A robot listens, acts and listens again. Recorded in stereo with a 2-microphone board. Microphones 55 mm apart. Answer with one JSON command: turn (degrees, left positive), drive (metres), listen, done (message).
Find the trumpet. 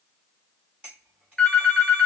{"listen": true}
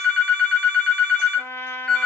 {"turn": 50}
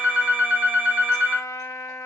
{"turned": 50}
{"turn": 80}
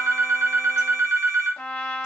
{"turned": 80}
{"turn": 25}
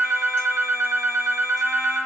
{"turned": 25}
{"done": "Found it: a trumpet, straight ahead, 1 to 2 m away."}